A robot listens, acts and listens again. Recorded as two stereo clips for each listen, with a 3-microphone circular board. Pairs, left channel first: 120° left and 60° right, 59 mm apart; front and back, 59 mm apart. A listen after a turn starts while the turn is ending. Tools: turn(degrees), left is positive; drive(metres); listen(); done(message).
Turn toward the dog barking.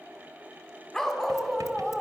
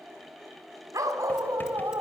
turn(degrees=-145)
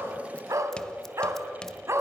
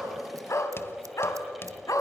turn(degrees=-20)
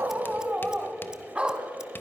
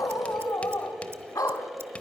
turn(degrees=15)
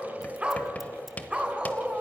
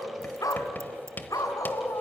turn(degrees=15)
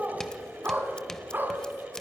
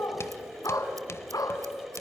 done("Facing the dog barking.")